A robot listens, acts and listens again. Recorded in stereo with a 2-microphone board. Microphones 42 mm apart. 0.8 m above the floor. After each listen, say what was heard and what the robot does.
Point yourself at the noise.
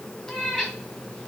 The cat meowing: about 25° left or 155° left. Turn 25° left.
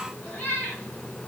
So it is at 125° left. Turn 125° left.
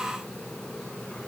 Keep listening.
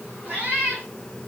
The cat meowing is now 40° right. Turn 40° right.
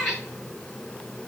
The cat meowing is now 10° left. Turn 10° left.
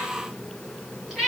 Facing the cat meowing, over 4 m away.